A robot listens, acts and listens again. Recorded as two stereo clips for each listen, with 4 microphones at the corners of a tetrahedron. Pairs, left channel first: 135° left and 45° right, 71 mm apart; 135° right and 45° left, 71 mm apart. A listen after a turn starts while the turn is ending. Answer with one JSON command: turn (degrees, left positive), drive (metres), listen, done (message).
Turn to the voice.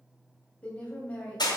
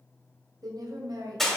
{"turn": 65}
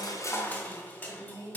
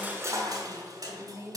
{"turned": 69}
{"done": "Facing the woman speaking."}